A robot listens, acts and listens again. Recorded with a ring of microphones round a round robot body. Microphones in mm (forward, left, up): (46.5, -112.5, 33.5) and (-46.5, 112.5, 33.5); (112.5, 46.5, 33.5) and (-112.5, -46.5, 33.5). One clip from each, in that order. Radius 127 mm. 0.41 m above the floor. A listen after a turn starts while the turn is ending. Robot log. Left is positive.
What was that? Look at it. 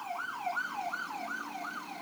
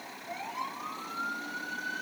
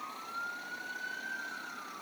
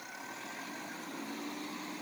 cmd idle
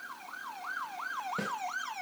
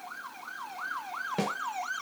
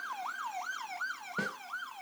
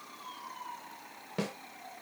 note: The snare drum: 150° left.
cmd yaw +150
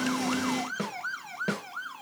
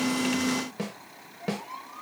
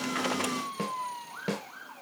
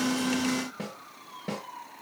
note: The snare drum is now 15° left.
cmd yaw +15
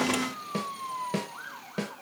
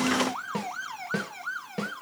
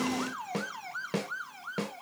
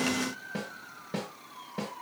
end: Facing the snare drum.